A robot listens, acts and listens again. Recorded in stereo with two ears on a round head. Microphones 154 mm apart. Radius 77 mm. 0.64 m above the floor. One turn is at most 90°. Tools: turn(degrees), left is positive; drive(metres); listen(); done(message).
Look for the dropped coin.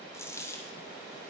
turn(degrees=15)
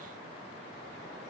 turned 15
listen()
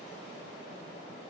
done("I heard a dropped coin, but can't make it out now. It was about straight ahead or 150° left.")